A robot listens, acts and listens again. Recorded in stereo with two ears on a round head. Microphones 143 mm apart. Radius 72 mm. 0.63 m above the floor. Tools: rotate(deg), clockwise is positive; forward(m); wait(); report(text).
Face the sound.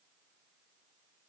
wait()
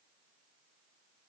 wait()
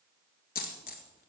rotate(-60)
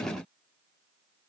wait()
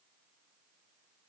report("I heard a dropped coin, but can't make it out now. It was about straight ahead or 60° left.")